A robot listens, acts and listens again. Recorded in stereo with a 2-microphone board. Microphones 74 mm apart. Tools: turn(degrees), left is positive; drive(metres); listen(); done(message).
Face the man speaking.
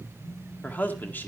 turn(degrees=25)
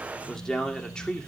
turn(degrees=30)
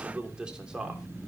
turn(degrees=-10)
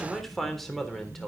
done("Facing the man speaking, 2 to 4 m away.")